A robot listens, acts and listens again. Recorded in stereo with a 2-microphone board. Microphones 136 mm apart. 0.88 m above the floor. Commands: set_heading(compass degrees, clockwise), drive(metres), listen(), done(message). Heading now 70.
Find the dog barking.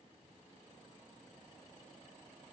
listen()
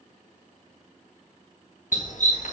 set_heading(5)
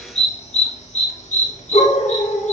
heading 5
set_heading(305)
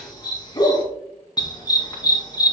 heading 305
set_heading(275)
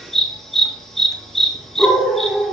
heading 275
done("Found it: a dog barking, straight ahead, 2 to 4 m away.")